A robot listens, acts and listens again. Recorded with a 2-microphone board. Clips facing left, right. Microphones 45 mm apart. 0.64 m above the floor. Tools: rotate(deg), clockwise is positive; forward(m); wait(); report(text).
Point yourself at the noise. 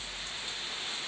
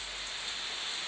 wait()
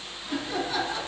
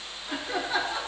rotate(15)
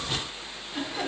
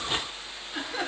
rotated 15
rotate(30)
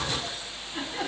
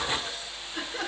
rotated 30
rotate(-20)
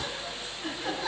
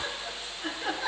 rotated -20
rotate(10)
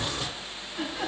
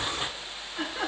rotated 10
report("Facing the laughter.")